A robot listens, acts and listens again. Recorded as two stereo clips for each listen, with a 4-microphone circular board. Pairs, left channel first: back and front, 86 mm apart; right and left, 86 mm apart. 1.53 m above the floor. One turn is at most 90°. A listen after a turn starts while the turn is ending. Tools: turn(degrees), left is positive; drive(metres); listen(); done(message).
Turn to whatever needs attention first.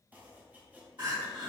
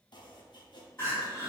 turn(degrees=-30)
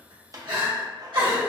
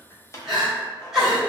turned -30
done("Found it: crying, straight ahead, 1 to 2 m away.")